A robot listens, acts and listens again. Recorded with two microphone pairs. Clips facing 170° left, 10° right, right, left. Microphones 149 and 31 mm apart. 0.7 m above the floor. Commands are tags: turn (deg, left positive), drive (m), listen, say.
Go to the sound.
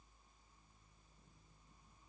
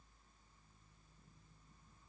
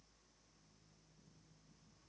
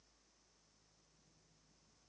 <listen/>
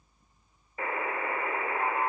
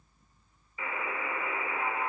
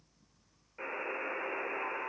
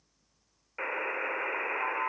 <turn deg="135"/>
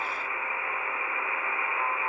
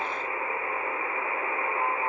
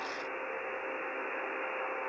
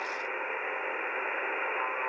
<turn deg="40"/>
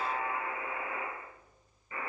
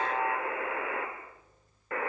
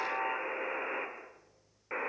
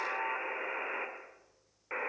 <drive m="1.0"/>
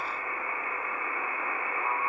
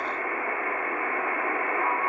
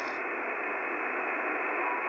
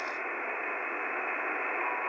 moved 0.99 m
<drive m="1.0"/>
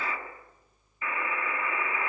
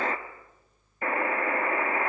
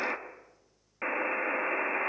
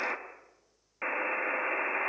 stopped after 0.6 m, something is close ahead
<say>Arrived at the buzzer, straight ahead.</say>